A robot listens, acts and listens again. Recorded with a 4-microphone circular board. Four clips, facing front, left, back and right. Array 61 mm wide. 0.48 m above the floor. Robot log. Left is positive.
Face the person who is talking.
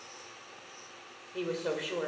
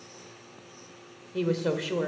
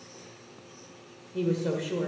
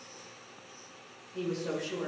note: The woman speaking: 70° left.
cmd yaw +70
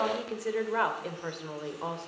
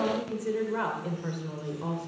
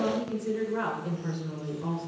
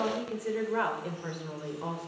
note: The woman speaking is now 10° right.
cmd yaw -10
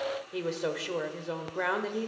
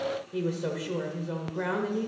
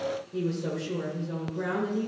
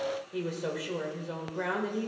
end: Facing the woman speaking, 1 to 2 m away.